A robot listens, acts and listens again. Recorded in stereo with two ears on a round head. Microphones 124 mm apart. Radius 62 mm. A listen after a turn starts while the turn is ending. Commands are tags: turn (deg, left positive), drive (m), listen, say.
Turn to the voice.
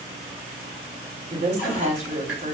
<turn deg="-55"/>
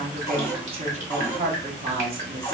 <turn deg="-55"/>
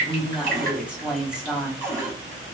<turn deg="-10"/>
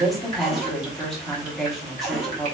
<say>Facing the woman speaking.</say>